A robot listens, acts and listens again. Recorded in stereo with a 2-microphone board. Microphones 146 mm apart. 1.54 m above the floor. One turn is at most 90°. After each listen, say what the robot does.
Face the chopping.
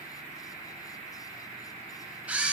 Keep listening.
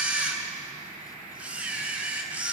Keep listening.
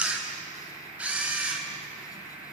I can't make out chopping, only a camera shutter.